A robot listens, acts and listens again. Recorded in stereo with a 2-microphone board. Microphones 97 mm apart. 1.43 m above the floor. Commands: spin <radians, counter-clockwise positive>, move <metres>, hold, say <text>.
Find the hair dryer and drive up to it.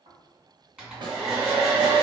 spin -0.52
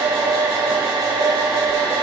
spin -2.44
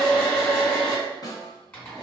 spin 0.44
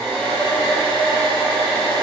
spin 0.26
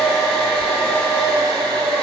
move 1.0
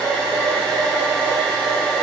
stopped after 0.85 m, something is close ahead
spin 0.17
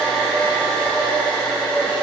say Arrived at the hair dryer, straight ahead.